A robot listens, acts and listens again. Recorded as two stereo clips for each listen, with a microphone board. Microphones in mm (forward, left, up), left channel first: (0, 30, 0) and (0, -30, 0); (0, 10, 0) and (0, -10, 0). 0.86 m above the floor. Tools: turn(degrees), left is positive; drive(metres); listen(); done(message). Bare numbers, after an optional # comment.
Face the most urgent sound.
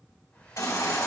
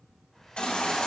# The baby crying: about 70° left or 110° left.
turn(70)
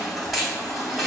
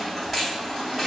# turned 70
done("Found it: a baby crying, straight ahead, 2 to 4 m away.")